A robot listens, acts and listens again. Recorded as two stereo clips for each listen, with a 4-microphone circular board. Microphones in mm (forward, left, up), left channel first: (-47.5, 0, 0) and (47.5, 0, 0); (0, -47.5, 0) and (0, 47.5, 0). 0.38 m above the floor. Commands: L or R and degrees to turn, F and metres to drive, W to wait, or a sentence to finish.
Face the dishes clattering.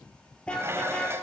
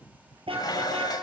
R55
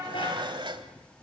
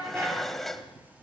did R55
Found it: dishes clattering, straight ahead, 1 to 2 m away.